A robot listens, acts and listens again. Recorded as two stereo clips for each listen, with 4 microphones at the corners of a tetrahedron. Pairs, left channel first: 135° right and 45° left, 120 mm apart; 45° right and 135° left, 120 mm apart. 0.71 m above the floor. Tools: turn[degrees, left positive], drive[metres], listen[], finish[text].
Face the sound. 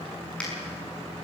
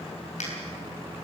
Thought: The finger snap: 55° right.
Action: turn[-55]
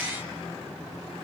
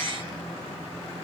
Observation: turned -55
Action: listen[]
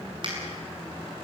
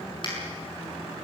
Action: finish[Facing the finger snap.]